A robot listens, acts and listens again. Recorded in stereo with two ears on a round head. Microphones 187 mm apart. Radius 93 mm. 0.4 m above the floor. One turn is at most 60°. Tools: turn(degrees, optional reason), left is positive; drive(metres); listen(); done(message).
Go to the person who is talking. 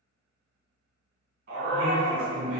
turn(degrees=30)
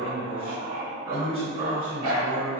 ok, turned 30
turn(degrees=60, reason="So it is at 145° left.")
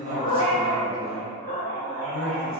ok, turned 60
turn(degrees=60, reason="The man speaking is now 85° left.")
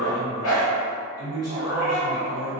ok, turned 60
turn(degrees=25, reason="The man speaking is now 25° left.")
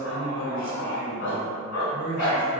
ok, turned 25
drive(metres=1.0)
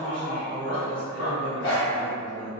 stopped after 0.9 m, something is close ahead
turn(degrees=10, reason="The man speaking is now 10° left.")
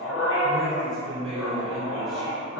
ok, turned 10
done("Arrived at the man speaking, straight ahead.")